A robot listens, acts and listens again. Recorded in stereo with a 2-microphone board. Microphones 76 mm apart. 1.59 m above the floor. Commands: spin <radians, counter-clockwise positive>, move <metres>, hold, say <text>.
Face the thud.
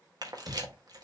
spin -1.05
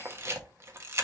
hold
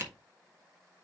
say I heard a thud, but can't make it out now. It was about straight ahead or 60° right.